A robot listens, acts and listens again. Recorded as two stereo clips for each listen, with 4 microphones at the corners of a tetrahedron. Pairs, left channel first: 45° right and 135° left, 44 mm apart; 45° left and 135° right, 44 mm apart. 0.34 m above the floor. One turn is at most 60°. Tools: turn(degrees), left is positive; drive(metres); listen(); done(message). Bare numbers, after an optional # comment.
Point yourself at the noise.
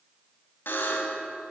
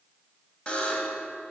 # The buzzer: 20° right.
turn(-20)
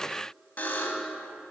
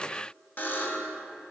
done("Facing the buzzer, 1 to 2 m away.")